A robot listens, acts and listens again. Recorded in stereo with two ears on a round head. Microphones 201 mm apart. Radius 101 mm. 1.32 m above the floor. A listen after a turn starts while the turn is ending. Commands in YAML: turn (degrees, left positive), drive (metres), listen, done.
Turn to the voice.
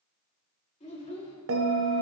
turn: 30
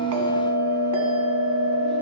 listen: true
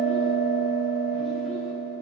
listen: true
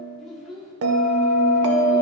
done: "Facing the child speaking."